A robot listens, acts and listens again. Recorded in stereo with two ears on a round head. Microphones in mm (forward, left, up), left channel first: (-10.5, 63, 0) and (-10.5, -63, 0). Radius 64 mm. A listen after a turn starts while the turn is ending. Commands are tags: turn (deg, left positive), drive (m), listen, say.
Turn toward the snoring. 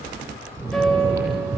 <turn deg="-20"/>
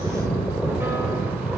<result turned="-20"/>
<say>Facing the snoring.</say>